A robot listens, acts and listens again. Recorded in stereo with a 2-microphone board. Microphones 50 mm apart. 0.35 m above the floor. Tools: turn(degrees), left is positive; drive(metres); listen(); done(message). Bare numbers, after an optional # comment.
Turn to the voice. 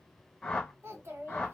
# The child speaking: about 55° right or 125° right.
turn(-55)
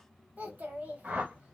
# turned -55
# So it is at 45° right.
turn(-45)
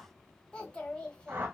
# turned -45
# The child speaking is now 20° left.
turn(20)
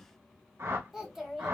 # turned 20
# The child speaking is now 10° right.
turn(-10)
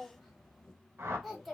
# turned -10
done("Found it: a child speaking, straight ahead.")